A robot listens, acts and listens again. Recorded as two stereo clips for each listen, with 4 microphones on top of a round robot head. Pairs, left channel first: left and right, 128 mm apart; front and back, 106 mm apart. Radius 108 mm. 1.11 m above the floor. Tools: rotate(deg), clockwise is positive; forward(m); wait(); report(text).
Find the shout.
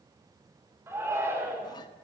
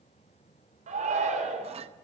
rotate(165)
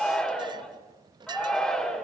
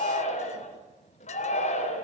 report("Facing the shout, over 4 m away.")